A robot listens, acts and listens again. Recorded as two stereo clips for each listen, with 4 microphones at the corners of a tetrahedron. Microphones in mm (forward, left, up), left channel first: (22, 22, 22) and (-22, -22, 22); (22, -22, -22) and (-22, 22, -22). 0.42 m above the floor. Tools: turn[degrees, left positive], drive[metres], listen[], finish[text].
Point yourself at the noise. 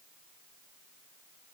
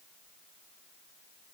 Action: listen[]
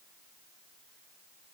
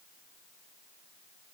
Action: listen[]
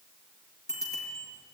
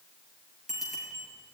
Thought: The bicycle bell: 50° left.
Action: turn[50]
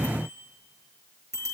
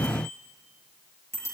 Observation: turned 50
Action: finish[Facing the bicycle bell, over 4 m away.]